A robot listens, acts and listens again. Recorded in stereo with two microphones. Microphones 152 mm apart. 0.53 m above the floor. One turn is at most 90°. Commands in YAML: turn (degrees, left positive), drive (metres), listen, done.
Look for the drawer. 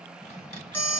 turn: 45
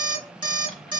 done: "Facing the drawer, 1 to 2 m away."